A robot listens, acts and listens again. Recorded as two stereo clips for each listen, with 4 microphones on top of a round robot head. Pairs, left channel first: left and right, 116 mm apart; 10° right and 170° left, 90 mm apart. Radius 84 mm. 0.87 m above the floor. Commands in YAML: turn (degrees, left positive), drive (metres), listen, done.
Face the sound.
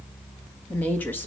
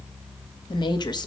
turn: 15
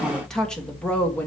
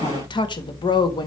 turn: 15
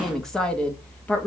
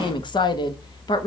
turn: 15
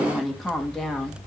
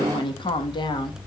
done: "Found it: a woman speaking, straight ahead, 1 to 2 m away."